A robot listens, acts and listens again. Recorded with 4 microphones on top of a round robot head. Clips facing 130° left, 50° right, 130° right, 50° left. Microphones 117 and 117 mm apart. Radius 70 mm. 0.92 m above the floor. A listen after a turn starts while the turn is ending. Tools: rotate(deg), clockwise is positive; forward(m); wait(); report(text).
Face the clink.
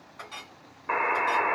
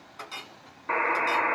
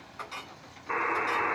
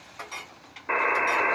report("Facing the clink.")